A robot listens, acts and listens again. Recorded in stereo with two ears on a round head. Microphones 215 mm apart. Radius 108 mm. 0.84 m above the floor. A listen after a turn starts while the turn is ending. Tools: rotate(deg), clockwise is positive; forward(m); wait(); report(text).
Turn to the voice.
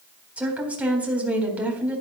rotate(30)
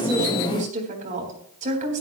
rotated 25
rotate(145)
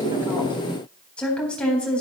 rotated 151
report("Found it: a woman speaking, straight ahead.")